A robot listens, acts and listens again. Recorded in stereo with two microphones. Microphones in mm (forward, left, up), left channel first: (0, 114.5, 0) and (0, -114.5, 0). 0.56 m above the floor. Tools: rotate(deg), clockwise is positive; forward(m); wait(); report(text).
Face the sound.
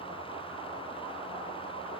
wait()
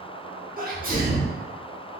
rotate(40)
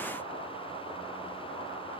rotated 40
wait()
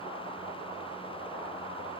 report("I heard a sneeze, but can't make it out now. It was about straight ahead or 100° right.")